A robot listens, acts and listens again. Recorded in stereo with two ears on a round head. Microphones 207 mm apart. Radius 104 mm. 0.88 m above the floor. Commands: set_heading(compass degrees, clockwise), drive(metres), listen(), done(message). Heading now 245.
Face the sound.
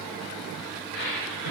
set_heading(180)
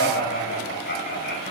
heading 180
set_heading(140)
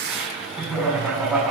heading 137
done("Found it: laughter, straight ahead, over 4 m away.")